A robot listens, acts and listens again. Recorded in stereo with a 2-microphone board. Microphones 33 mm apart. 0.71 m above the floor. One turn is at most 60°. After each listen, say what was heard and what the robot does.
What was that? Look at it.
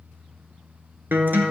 The guitar: about 65° right or 115° right. Turn 60° right.
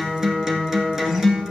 So it is at 10° right. Turn 10° right.
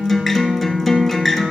Facing the guitar.